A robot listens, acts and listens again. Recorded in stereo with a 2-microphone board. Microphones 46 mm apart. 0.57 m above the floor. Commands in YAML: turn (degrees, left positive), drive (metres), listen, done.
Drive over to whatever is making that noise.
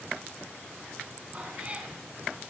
turn: -30
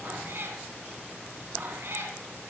turn: -120
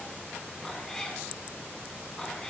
turn: 10
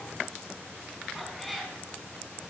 drive: 1.0
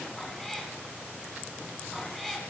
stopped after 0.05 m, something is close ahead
done: "Blocked. The cat meowing is further on, straight ahead."